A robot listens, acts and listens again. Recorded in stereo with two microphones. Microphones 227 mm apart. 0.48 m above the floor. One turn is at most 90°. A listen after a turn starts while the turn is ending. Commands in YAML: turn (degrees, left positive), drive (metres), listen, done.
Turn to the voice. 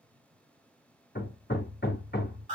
listen: true
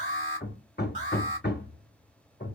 listen: true
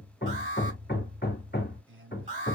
turn: -60
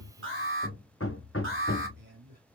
turn: -55
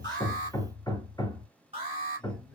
listen: true
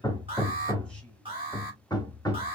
listen: true
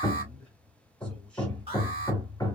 done: "I heard a man speaking from this way, but can't make it out now."